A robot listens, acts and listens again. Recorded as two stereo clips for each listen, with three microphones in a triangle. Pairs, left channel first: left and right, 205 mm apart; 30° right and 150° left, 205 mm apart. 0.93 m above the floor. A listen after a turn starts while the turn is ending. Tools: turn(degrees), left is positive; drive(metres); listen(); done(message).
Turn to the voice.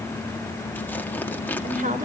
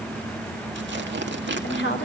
turn(degrees=-45)
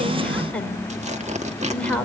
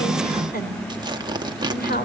done("Facing the woman speaking, over 4 m away.")